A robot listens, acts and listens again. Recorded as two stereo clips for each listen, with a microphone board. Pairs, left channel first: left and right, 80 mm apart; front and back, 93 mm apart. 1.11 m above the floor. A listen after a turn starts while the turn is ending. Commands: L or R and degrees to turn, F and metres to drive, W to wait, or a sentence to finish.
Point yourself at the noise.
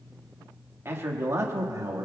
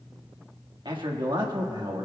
R135
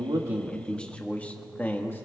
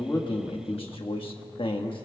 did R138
L25
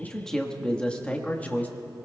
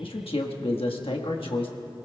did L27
L20
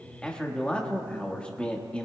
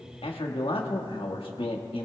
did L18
L15
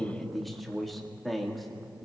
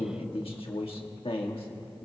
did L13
Found it: a man speaking, straight ahead, 1 to 2 m away.